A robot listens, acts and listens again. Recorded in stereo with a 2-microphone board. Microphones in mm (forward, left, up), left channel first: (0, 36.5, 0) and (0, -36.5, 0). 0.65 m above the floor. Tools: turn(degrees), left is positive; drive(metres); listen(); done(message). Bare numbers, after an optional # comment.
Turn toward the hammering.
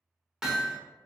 turn(-30)
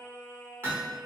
# So it is at 145° right.
turn(-145)
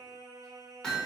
# The hammering is now 15° left.
turn(15)
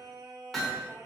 done("Found it: hammering, straight ahead.")